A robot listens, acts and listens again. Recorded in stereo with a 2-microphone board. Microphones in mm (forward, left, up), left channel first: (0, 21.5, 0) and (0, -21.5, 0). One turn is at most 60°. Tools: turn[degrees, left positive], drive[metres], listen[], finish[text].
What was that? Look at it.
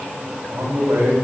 Thought: The man speaking: about 65° right or 115° right.
Action: turn[-60]
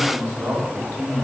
Thought: So it is at 65° right.
Action: turn[-60]
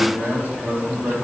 Thought: The man speaking is now 45° right.
Action: turn[-45]
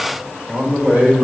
Thought: The man speaking is now 20° right.
Action: turn[-20]
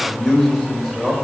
Action: finish[Facing the man speaking, 2 to 4 m away.]